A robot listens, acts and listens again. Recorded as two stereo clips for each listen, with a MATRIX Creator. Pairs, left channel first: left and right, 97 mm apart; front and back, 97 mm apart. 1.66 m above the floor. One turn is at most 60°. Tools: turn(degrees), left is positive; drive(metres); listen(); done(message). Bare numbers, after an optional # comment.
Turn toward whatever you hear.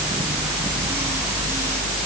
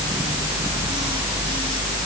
listen()
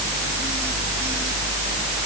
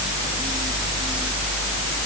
listen()
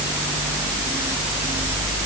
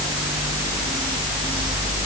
done("I can't make out anything to turn to.")